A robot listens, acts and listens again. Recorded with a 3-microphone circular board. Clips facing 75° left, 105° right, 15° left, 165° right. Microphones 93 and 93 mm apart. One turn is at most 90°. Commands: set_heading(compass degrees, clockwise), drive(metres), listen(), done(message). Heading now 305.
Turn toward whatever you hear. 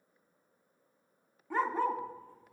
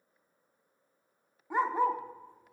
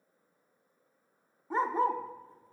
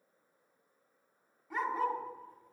set_heading(340)
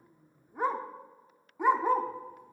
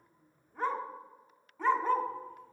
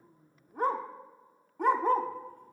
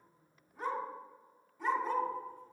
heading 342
done("Facing the dog barking, under 1 m away.")